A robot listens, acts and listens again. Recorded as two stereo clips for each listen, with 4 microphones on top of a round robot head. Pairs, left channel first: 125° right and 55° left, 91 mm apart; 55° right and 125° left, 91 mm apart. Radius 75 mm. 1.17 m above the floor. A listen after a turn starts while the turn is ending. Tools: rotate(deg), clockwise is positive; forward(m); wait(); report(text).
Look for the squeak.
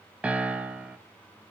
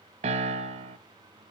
wait()
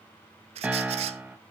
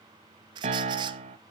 rotate(-80)
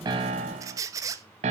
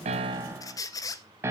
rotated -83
report("Facing the squeak.")